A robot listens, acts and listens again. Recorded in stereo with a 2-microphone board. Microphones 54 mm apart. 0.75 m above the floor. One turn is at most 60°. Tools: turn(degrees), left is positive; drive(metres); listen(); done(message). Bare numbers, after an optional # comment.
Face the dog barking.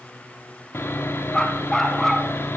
turn(30)
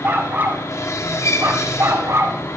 # So it is at 65° right.
turn(-60)
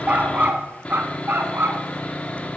# The dog barking is now 45° right.
turn(-45)
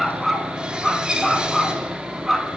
done("Found it: a dog barking, straight ahead.")